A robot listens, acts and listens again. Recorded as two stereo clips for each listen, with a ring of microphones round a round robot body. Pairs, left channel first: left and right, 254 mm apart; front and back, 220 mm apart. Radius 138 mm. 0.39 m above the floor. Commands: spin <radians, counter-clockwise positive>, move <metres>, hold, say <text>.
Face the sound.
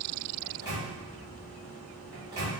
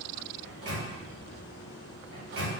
spin -2.88
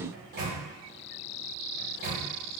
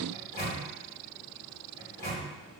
spin -0.70
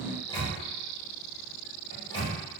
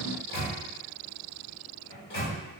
spin 0.35
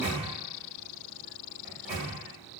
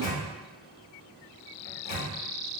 say Found it: a microwave, straight ahead.